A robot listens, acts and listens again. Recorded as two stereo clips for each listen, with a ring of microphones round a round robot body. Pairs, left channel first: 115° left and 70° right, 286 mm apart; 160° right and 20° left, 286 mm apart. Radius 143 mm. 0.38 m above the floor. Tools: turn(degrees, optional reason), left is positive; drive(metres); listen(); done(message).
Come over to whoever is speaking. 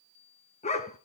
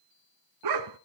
listen()
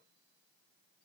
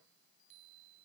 listen()
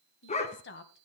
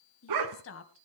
turn(degrees=160, reason="The woman speaking: 160° left.")
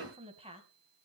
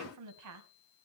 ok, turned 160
drive(metres=1.0)
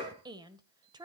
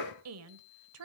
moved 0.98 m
drive(metres=1.0)
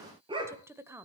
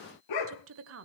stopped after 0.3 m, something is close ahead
turn(degrees=10, reason="The woman speaking is now 10° left.")
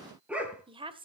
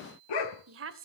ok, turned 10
done("Arrived at the woman speaking, straight ahead.")